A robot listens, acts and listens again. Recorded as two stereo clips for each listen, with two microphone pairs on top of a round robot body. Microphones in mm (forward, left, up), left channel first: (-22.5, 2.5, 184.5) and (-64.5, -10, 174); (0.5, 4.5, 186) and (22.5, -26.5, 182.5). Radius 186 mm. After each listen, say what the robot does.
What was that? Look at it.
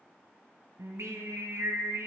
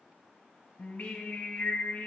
Turn 180° left.
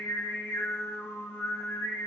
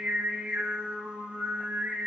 Found it: singing, straight ahead.